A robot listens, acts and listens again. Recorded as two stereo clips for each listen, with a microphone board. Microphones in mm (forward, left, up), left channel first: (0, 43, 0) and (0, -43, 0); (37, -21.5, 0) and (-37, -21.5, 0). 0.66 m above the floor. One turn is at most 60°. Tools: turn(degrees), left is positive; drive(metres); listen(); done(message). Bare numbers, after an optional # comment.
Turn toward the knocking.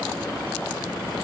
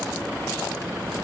listen()
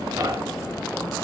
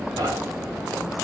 # The knocking: 140° right.
turn(-60)
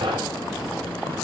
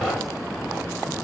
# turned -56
# The knocking is now 85° right.
turn(-60)
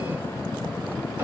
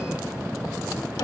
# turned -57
# Nothing new. It was at 25° right.
turn(-25)
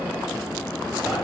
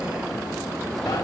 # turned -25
done("Facing the knocking, 2 to 4 m away.")